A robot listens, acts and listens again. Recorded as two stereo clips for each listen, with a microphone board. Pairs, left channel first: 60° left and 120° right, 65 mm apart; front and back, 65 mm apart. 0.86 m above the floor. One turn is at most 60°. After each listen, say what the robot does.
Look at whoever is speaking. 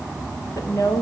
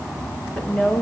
Turn 60° left.
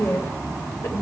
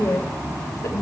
Turn 25° left.
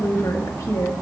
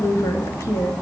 Turn 40° left.
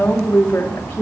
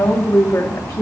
Found it: a woman speaking, straight ahead.